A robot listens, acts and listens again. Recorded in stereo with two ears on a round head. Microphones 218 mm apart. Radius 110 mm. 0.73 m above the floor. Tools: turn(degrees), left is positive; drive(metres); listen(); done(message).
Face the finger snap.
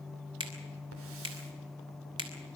turn(degrees=-20)
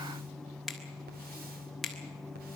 done("Found it: a finger snap, straight ahead, 2 to 4 m away.")